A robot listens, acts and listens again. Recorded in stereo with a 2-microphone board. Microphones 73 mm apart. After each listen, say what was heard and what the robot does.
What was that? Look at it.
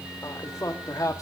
The man speaking: about 45° left or 135° left. Turn 45° left.
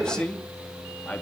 So it is at 20° left. Turn 20° left.
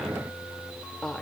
The man speaking is now 10° left. Turn 10° left.
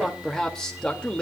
The man speaking is now 15° left. Turn 15° left.
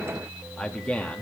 The man speaking is now 15° left. Turn 15° left.
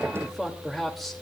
Facing the man speaking, 2 to 4 m away.